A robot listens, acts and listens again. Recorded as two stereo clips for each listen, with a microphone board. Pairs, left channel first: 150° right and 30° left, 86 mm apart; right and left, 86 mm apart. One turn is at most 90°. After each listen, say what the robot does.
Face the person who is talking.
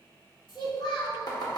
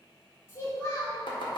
Turn 90° right.
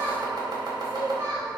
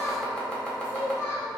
Turn 30° right.
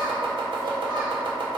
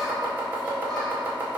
Keep listening.
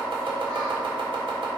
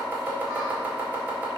Keep listening.
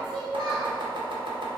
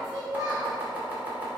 Facing the child speaking.